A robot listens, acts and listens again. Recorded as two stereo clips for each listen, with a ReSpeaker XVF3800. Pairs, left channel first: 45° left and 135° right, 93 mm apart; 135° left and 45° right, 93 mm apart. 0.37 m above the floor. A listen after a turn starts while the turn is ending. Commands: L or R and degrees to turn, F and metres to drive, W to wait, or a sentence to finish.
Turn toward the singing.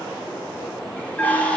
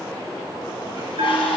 W
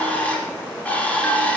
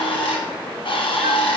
W
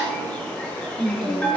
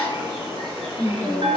R165
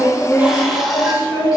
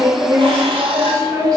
Facing the singing, 1 to 2 m away.